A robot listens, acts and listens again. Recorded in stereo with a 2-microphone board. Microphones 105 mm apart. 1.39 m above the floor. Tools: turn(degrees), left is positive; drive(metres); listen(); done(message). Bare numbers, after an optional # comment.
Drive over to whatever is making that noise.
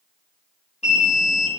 turn(90)
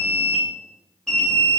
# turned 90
# So it is at 10° left.
turn(10)
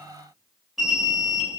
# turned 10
drive(1.0)
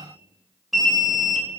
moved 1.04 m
drive(1.0)
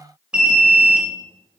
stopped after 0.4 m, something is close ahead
# The alarm is now 10° right.
turn(-10)
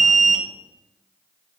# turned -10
done("Arrived at the alarm, straight ahead.")